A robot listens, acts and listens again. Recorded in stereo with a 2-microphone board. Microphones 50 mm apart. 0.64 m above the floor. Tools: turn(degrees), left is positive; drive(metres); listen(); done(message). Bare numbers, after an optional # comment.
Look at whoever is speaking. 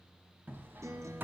listen()
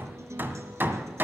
listen()
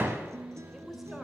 turn(-30)
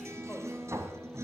listen()
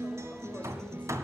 listen()
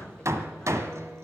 done("I heard a woman speaking, but can't make it out now. It was about 25° left or 145° right.")